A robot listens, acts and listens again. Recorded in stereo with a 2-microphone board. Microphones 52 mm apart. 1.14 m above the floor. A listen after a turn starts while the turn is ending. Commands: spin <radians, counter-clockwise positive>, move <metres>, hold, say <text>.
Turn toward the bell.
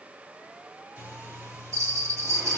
spin -1.05
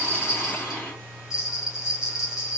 spin -0.17
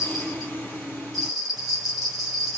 say Found it: a bell, straight ahead.